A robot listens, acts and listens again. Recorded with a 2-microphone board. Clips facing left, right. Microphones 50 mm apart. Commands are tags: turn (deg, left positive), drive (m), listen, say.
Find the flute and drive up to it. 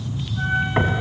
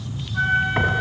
<turn deg="-70"/>
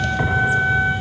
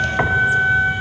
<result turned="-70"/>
<turn deg="-40"/>
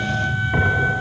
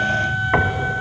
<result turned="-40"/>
<drive m="1.0"/>
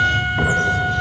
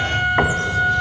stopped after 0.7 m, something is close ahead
<say>Blocked. The flute is further on, straight ahead.</say>